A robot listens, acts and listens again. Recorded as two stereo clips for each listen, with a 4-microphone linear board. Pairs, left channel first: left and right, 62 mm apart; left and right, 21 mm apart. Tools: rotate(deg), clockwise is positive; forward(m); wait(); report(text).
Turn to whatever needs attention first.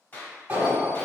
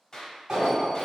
rotate(25)
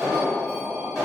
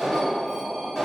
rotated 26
report("Found it: an alarm, straight ahead.")